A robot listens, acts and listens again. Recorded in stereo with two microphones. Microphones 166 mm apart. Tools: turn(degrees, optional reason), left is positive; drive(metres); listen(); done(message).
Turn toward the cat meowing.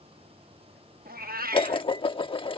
turn(degrees=-60, reason="The cat meowing: about 60° right or 120° right.")
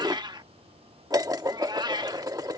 turn(degrees=-30, reason="So it is at 30° right.")
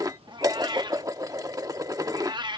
turn(degrees=-30, reason="The cat meowing is now 30° right.")
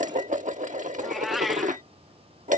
done("Found it: a cat meowing, straight ahead.")